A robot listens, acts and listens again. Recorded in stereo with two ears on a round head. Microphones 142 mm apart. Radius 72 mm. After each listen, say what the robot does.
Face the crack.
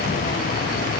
Keep listening.
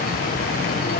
Keep listening.
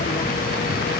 I can't make out a crack.